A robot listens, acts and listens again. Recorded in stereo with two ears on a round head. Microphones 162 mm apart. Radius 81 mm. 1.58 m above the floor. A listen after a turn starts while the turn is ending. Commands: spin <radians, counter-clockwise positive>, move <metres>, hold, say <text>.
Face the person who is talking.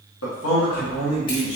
spin 1.57
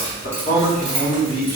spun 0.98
spin 0.87
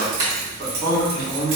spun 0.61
spin 0.35
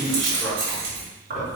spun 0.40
hold
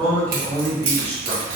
say Found it: a man speaking, straight ahead, 2 to 4 m away.